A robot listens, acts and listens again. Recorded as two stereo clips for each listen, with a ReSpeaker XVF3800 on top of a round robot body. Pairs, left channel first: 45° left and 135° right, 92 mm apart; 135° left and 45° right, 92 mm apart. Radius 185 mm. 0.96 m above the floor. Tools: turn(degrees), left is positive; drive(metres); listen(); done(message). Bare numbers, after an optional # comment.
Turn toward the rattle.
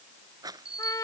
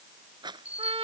# The rattle: 85° right.
turn(-85)
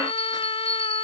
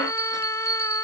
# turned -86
listen()
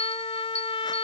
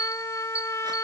listen()
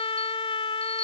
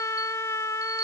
done("Facing where the rattle came from. I can't hear it now.")